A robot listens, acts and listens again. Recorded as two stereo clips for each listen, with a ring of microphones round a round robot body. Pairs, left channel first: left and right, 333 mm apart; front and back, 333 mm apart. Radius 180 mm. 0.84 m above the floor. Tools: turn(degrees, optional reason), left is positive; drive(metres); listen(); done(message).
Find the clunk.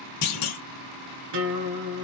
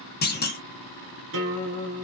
turn(degrees=60, reason="The clunk: 60° left.")
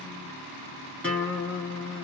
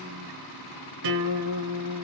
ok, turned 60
done("Facing where the clunk came from. I can't hear it now.")